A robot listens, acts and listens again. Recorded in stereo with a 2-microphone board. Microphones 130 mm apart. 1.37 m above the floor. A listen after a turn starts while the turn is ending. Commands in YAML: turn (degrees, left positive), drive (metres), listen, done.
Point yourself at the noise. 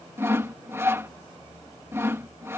turn: -20
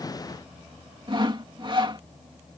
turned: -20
turn: -140
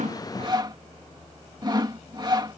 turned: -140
turn: -35
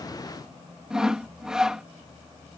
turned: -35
done: "Found it: sawing, straight ahead."